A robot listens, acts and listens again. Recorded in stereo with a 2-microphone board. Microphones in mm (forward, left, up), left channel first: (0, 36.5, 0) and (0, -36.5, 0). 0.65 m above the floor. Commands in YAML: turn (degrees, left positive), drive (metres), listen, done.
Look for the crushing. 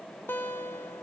listen: true
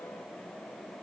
listen: true
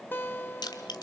turn: 90
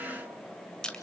turn: 10
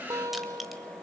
listen: true
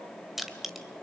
done: "Facing the crushing."